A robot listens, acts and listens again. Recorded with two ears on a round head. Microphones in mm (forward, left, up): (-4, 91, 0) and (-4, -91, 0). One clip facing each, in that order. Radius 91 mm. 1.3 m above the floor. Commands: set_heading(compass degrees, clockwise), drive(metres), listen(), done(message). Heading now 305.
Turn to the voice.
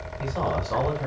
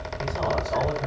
set_heading(235)
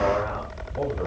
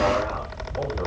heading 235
listen()
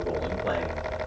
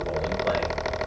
listen()
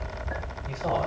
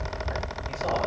set_heading(220)
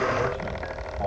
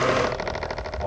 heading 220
set_heading(210)
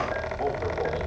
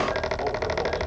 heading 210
done("Facing the man speaking, over 4 m away.")